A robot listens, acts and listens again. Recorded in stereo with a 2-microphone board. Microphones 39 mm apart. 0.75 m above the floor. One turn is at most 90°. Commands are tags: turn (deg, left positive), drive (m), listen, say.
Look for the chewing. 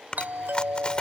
<turn deg="25"/>
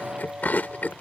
<turn deg="90"/>
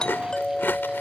<turn deg="80"/>
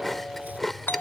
<turn deg="10"/>
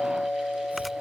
<listen/>
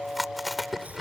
<say>Found it: chewing, straight ahead.</say>